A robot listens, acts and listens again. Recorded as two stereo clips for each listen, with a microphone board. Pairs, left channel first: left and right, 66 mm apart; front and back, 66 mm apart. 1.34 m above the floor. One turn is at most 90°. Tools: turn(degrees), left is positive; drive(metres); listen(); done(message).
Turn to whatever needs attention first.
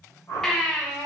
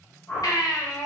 done("Facing the baby crying, under 1 m away.")